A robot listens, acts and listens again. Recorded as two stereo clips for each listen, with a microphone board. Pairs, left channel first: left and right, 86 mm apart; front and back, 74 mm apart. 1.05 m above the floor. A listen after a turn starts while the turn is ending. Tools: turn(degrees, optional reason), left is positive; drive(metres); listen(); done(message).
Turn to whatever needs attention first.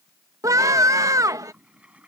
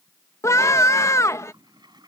turn(degrees=-45, reason="The scream: 45° right.")
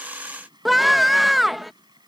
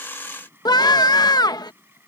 done("Facing the scream.")